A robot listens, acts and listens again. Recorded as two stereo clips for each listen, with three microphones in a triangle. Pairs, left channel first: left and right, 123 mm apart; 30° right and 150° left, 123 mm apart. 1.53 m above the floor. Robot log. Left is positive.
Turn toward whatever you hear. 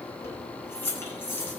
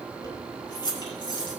note: The keys jangling: 20° left.
cmd yaw +20
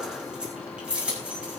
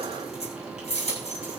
note: The keys jangling is now 10° right.
cmd yaw -10
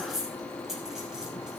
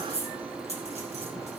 end: Facing the keys jangling.